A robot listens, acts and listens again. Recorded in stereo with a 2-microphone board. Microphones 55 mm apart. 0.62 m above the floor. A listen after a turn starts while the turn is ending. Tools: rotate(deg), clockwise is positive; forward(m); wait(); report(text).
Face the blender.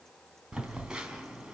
wait()
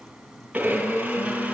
rotate(25)
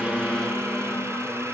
rotate(130)
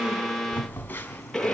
report("Found it: a blender, straight ahead, over 4 m away.")